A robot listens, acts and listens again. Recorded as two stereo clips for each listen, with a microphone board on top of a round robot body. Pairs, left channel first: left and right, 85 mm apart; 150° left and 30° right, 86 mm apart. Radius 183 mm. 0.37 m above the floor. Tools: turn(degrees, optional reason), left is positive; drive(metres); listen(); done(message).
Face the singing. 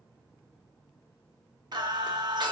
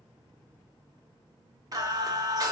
turn(degrees=-65, reason="The singing: 65° right.")
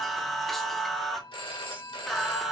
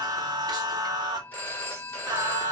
done("Facing the singing, 1 to 2 m away.")